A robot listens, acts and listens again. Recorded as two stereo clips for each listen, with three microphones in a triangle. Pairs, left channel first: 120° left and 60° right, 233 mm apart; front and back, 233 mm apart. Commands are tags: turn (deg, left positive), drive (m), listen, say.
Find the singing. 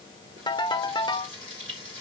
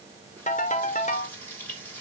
<listen/>
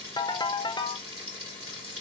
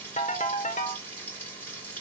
<listen/>
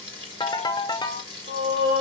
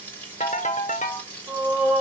<turn deg="-95"/>
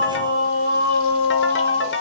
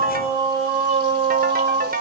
<turn deg="-25"/>
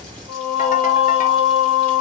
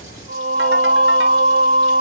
<say>Facing the singing.</say>